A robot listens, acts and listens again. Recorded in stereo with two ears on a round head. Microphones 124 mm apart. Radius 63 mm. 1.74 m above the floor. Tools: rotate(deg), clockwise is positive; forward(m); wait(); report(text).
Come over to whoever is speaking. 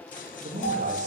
rotate(60)
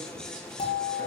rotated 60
wait()
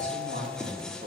rotate(60)
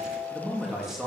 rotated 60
forward(1.0)
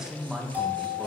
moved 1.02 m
forward(1.0)
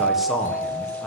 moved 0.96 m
wait()
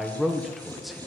forward(1.0)
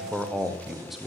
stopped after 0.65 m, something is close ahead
report("Arrived at the man speaking, straight ahead.")